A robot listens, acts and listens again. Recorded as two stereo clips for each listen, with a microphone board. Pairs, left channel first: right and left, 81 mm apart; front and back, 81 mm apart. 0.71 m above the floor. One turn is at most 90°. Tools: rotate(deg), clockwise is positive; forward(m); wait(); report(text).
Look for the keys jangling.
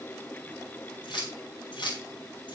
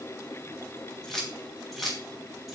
rotate(90)
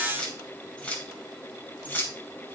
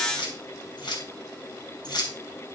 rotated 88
rotate(25)
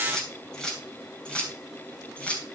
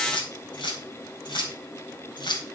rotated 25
rotate(15)
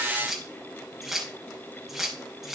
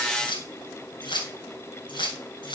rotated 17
report("Found it: keys jangling, straight ahead.")